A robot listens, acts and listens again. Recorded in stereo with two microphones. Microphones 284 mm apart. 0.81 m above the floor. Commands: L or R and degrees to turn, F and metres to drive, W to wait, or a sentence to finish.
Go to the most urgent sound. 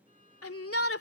L55
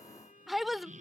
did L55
F1.0
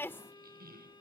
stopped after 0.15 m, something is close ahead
L10
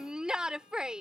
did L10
Something is in my way. I am facing the shout but have not reached it.